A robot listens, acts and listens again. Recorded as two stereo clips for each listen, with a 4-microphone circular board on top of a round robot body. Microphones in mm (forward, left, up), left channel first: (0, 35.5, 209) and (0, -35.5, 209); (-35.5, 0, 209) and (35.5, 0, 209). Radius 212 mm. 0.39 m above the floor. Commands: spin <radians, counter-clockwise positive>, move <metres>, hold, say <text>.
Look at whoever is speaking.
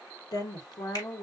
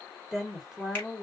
spin 1.48
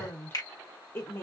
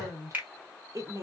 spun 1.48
spin 0.61
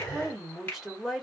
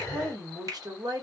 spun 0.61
say Facing the woman speaking, 1 to 2 m away.